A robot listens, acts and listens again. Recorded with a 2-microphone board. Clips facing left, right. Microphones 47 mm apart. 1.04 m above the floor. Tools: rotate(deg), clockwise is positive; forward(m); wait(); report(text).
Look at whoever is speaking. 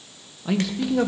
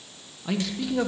rotate(-30)
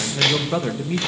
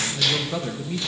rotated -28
rotate(-145)
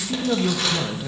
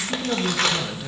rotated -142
report("Facing the man speaking, under 1 m away.")